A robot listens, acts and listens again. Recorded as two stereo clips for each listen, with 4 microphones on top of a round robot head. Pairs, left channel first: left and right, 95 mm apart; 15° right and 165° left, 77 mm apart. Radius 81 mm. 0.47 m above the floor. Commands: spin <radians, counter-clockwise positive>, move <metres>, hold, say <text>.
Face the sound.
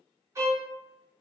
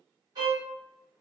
spin -2.62
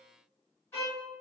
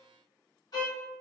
spin 0.35
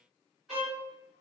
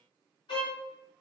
say Found it: a violin, straight ahead, 1 to 2 m away.